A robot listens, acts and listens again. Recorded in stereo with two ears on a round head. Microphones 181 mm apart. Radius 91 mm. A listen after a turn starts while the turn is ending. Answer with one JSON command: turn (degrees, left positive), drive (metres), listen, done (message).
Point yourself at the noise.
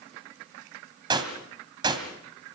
{"turn": -20}
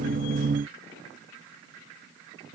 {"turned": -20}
{"listen": true}
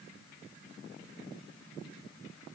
{"done": "I heard a gunshot, but can't make it out now. It was about straight ahead or 140° right."}